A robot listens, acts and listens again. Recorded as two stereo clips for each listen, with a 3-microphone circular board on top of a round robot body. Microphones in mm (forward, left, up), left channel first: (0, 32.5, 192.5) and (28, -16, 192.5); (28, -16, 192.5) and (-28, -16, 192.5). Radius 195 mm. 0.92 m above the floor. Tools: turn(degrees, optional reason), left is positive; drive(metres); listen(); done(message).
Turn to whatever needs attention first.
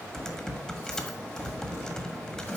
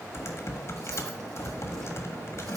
listen()
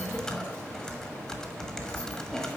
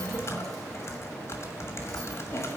listen()
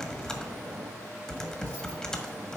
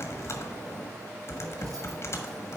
done("I can't make out anything urgent to turn to.")